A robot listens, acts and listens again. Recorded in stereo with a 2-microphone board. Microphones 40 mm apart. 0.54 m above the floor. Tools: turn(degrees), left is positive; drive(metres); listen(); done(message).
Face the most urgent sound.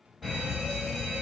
turn(degrees=30)
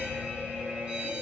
turn(degrees=-25)
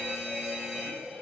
turn(degrees=-15)
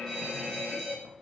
done("Facing the fire alarm.")